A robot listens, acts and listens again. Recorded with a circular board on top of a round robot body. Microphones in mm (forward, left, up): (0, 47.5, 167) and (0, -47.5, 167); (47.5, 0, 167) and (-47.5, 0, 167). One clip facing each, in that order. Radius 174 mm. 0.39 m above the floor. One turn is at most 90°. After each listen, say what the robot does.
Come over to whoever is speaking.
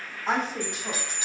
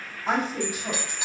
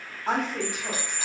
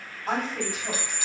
Drive 1.0 m forward.
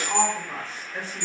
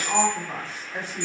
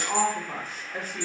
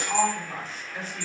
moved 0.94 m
Turn 20° right.
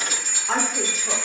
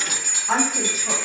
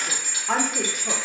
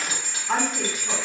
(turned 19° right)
Drive 1.0 m forward.
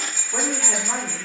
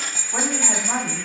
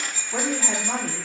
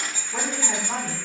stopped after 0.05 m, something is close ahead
I am next to the woman speaking.